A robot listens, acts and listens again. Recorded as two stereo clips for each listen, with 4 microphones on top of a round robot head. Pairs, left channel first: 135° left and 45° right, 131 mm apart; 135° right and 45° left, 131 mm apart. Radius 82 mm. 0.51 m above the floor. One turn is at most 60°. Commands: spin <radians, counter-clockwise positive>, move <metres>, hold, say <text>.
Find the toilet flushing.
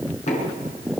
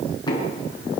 hold
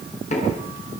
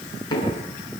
hold
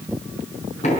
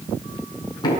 say I can't make out a toilet flushing, only knocking.